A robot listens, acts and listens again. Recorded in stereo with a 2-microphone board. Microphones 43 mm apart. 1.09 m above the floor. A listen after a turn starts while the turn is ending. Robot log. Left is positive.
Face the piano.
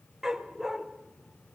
cmd idle
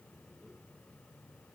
cmd idle
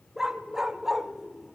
end: I can't make out a piano to turn to.